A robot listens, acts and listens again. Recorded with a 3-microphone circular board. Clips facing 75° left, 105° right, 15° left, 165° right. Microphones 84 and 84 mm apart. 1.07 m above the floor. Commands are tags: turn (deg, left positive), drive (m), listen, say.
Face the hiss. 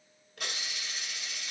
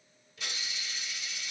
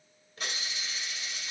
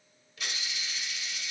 <turn deg="60"/>
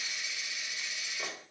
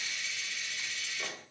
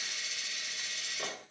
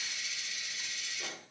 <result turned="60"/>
<say>Facing the hiss, 1 to 2 m away.</say>